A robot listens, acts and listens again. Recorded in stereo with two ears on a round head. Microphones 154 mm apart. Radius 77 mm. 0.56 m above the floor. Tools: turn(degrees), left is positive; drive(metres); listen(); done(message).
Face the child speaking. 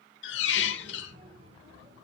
turn(degrees=-90)
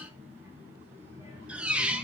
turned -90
turn(degrees=-15)
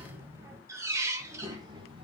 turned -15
turn(degrees=-30)
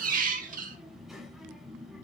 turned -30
done("Found it: a child speaking, straight ahead.")